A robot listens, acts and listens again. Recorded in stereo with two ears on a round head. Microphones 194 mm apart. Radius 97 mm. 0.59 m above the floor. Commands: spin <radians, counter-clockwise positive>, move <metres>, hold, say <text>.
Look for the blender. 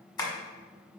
hold
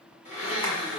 spin 0.61
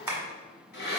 spin 2.01
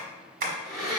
say Found it: a blender, straight ahead, 1 to 2 m away.